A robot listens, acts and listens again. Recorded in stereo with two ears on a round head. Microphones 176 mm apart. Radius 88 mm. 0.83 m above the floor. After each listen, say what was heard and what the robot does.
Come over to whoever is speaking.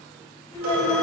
Turn 30° left.
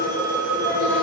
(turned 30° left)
Keep listening.
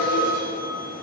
Keep listening.
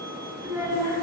So it is at 15° right. Turn 15° right.
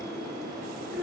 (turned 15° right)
Drive 1.0 m forward.
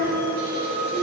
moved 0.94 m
Drive 1.0 m forward.
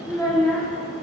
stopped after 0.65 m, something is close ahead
I am next to the child speaking.